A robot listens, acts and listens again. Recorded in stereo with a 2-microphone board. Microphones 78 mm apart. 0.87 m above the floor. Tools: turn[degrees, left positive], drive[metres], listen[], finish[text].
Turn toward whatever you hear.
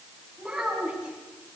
Action: turn[-30]
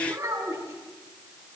Thought: So it is at 140° right.
Action: turn[-140]
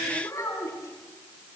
Thought: The child speaking is now 40° left.
Action: turn[40]
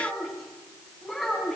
Action: finish[Found it: a child speaking, straight ahead.]